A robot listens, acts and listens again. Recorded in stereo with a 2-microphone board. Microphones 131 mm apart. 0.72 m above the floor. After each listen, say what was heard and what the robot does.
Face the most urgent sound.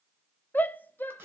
Turn 30° left.
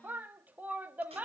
So it is at 15° right. Turn 15° right.
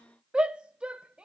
The shout is now 10° right. Turn 10° right.
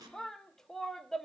Found it: a shout, straight ahead.